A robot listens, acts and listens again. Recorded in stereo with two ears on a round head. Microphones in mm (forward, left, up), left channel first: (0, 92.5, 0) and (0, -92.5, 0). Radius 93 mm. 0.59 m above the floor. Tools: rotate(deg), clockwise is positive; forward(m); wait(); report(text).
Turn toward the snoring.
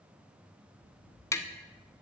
wait()
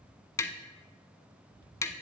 wait()
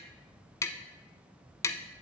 report("I can't make out snoring to turn to.")